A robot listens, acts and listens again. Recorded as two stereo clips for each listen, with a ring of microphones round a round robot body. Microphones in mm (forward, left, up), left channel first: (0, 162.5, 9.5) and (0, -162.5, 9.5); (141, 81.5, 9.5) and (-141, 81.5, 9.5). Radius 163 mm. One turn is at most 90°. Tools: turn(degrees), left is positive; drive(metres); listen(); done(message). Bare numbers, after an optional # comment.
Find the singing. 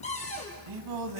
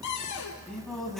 # The singing: 90° right.
turn(-90)
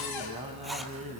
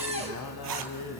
# The singing is now 25° right.
turn(-25)
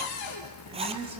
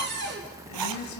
listen()
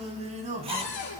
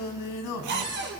# The singing is now 25° right.
turn(-25)
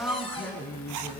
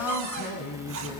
done("Found it: singing, straight ahead.")